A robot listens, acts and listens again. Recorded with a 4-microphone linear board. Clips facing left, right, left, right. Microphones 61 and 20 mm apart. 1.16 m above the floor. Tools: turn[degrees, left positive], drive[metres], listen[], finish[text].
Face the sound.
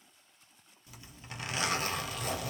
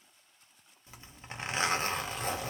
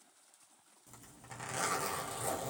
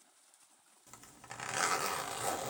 Thought: The zipper: about 30° right or 150° right.
Action: turn[-30]
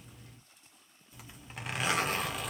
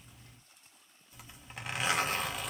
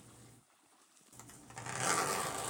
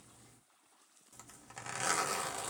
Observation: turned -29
Action: finish[Facing the zipper.]